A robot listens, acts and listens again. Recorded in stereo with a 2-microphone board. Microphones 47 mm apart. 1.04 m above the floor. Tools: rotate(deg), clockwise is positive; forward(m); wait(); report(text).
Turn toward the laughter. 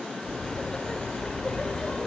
rotate(-20)
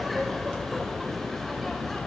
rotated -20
rotate(-30)
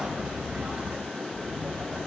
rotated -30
rotate(25)
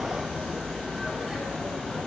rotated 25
rotate(10)
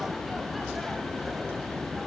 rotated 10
report("Facing the laughter.")